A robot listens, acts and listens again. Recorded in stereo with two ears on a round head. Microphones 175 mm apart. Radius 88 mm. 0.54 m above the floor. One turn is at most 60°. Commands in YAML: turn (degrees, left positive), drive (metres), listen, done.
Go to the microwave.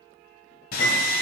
turn: 60
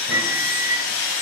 drive: 1.0
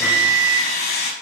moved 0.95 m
drive: 1.0
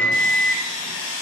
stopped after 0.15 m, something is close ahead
turn: 10
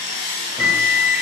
done: "Arrived at the microwave, straight ahead."